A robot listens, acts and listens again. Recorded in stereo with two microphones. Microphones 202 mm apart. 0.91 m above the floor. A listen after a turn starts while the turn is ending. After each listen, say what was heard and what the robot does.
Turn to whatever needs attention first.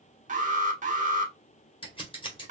The alarm: about 40° right or 140° right. Turn 40° right.
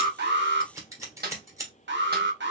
So it is at 95° right. Turn 95° right.
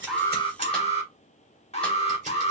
The alarm is now 35° left. Turn 35° left.
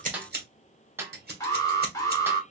The alarm is now 20° left. Turn 20° left.
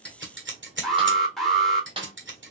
Facing the alarm.